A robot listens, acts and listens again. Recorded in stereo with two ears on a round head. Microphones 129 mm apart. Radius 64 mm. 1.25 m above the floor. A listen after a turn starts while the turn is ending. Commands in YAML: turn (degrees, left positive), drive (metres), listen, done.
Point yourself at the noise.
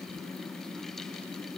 listen: true
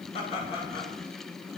turn: 45
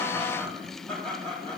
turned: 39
turn: 10
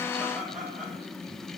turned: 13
done: "Facing the laughter."